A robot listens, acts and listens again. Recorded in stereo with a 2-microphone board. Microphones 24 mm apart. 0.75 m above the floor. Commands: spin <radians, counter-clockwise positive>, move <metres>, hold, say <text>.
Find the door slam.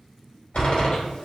spin 1.57
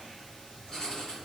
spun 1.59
say I heard a door slam from this way, but can't make it out now.